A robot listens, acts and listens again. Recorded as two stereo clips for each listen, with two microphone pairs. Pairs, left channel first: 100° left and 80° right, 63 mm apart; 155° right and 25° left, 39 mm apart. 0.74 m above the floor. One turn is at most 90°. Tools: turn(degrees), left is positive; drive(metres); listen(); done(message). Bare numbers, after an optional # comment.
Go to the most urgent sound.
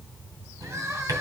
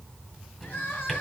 # The crying: 120° right.
turn(-90)
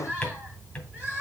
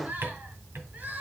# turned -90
# The crying is now 10° right.
turn(-10)
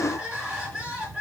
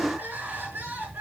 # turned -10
drive(1.0)
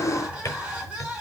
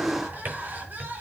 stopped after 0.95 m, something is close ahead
done("Something is in my way. I am facing the crying but have not reached it.")